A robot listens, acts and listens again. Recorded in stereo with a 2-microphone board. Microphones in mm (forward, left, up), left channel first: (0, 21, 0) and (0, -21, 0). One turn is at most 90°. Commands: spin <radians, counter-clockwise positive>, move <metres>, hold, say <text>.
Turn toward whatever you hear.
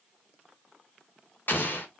spin 1.05
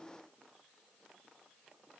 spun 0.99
hold
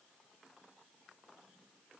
say I heard an explosion, but can't make it out now. It was about 5° left or 60° left.